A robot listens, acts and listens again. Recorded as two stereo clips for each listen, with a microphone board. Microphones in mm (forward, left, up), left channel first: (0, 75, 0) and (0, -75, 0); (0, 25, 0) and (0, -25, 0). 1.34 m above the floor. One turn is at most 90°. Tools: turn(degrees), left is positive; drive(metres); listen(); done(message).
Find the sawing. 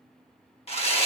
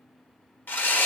turn(degrees=40)
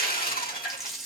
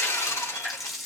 turn(degrees=90)
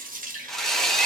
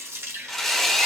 done("Facing the sawing.")